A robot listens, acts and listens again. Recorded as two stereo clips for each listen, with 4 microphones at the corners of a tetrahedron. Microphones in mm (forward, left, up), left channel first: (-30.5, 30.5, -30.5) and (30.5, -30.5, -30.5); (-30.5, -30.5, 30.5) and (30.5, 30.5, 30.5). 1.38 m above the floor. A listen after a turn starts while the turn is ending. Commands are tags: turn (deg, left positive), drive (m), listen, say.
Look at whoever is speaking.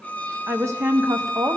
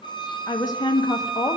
<turn deg="-100"/>
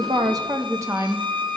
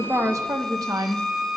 <say>Found it: a woman speaking, straight ahead, under 1 m away.</say>